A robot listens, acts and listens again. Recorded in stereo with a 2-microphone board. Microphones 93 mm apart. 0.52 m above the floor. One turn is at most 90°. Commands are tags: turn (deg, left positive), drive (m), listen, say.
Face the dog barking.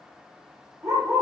<turn deg="-35"/>
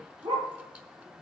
<turn deg="-90"/>
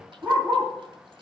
<turn deg="-20"/>
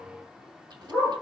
<say>Facing the dog barking, over 4 m away.</say>